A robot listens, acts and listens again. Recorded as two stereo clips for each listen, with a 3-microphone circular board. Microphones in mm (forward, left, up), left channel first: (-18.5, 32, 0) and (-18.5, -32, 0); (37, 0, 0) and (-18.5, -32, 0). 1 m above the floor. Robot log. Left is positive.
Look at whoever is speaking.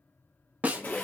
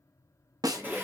cmd idle
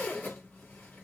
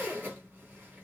cmd idle
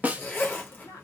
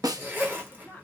note: The woman speaking: 90° left.
cmd yaw +90
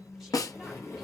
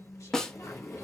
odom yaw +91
cmd idle
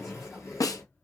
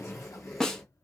cmd idle
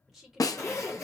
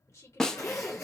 end: Facing the woman speaking.